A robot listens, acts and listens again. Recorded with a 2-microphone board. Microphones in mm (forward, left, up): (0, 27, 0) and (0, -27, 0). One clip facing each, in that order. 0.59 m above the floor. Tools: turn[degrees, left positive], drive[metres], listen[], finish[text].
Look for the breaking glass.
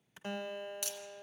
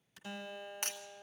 Thought: The breaking glass: about 45° right or 135° right.
Action: turn[-45]
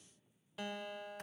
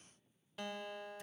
Action: listen[]
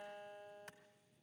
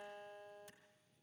Action: finish[I heard breaking glass, but can't make it out now. It was about straight ahead or 90° right.]